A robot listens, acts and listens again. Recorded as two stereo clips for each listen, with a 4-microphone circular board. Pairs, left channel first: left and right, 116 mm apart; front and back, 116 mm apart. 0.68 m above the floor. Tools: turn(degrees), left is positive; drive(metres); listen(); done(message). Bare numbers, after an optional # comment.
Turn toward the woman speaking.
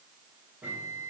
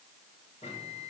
listen()
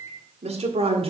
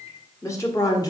# The woman speaking: 55° right.
turn(-55)
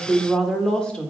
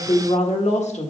# The woman speaking is now 10° left.
turn(10)
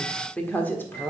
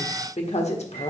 # The woman speaking is now 20° left.
turn(20)
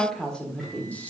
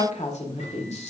# The woman speaking is now 15° left.
turn(15)
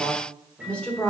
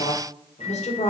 # The woman speaking is now 10° left.
turn(10)
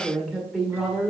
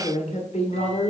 done("Found it: a woman speaking, straight ahead, 1 to 2 m away.")